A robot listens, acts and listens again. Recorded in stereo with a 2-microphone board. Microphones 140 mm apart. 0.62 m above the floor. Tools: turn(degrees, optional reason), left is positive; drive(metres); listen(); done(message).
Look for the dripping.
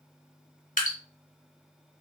turn(degrees=90)
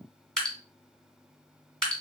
done("Facing the dripping.")